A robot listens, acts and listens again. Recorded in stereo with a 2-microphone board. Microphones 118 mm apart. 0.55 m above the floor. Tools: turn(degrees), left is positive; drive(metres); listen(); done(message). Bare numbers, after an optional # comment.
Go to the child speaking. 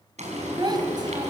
# The child speaking: about 40° right or 140° right.
turn(-40)
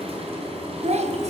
# So it is at 100° right.
turn(-100)
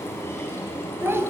# The child speaking is now 20° right.
turn(-20)
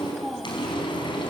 drive(1.0)
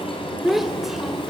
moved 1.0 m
drive(1.0)
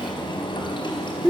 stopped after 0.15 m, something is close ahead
# The child speaking is now 10° right.
turn(-10)
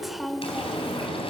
done("Arrived at the child speaking, straight ahead.")